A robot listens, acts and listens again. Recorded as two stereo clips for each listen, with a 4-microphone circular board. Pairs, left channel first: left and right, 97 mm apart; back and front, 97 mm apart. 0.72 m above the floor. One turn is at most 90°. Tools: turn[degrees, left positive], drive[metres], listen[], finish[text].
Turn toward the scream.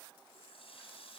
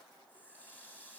Action: listen[]
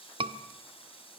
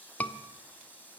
Thought: The scream: 105° right.
Action: turn[-90]
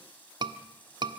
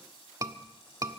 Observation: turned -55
Thought: The scream is now 55° right.
Action: turn[-55]
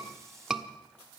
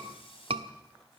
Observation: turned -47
Action: finish[Facing the scream, 1 to 2 m away.]